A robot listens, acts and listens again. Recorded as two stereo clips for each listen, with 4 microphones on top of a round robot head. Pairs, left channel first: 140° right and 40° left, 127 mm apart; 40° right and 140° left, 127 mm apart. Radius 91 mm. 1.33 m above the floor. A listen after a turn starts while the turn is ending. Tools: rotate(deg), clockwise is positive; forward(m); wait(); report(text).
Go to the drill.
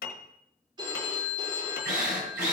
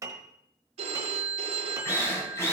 rotate(-30)
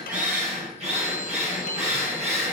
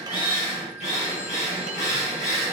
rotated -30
forward(1.0)
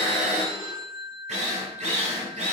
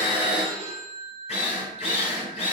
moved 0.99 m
forward(1.0)
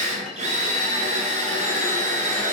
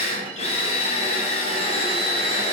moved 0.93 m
forward(1.0)
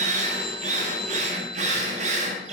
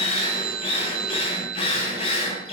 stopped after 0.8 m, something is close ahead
report("Arrived at the drill, straight ahead.")